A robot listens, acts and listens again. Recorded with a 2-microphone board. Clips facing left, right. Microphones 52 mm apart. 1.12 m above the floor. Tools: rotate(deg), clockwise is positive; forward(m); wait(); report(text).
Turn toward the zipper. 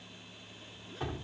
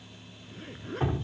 rotate(45)
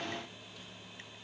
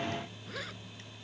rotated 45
rotate(90)
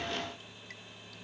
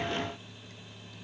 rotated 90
wait()
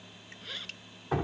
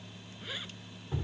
rotate(10)
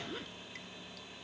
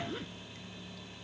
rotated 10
report("Facing the zipper.")